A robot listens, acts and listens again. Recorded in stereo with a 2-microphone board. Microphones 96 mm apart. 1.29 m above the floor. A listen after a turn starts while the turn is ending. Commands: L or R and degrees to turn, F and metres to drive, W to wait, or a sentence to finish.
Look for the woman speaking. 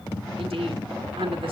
R90
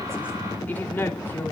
L20
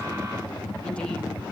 W
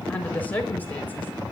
L20
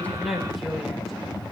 Facing the woman speaking, over 4 m away.